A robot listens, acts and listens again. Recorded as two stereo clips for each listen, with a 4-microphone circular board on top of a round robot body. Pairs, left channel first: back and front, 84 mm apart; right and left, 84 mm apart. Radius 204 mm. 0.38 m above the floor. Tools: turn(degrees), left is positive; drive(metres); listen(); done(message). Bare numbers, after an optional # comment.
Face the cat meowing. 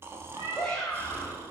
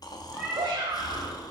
# The cat meowing: 20° left.
turn(20)
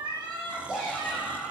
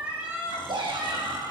# The cat meowing is now 25° left.
turn(25)
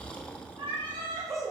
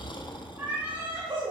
# The cat meowing is now 25° left.
turn(25)
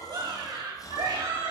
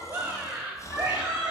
done("Facing the cat meowing, 2 to 4 m away.")